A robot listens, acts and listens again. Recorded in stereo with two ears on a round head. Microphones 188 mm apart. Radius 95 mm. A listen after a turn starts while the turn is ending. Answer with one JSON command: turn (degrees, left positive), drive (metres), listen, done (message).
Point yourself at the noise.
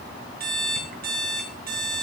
{"turn": -50}
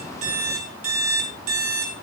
{"turn": -80}
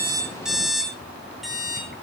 {"done": "Facing the alarm clock."}